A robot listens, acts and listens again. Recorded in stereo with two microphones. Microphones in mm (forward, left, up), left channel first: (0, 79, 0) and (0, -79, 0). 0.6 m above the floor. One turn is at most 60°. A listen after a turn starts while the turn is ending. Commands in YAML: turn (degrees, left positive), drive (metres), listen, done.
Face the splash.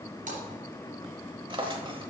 turn: -55
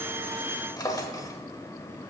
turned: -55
listen: true
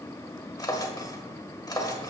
done: "I heard a splash, but can't make it out now. It was about straight ahead or 70° right."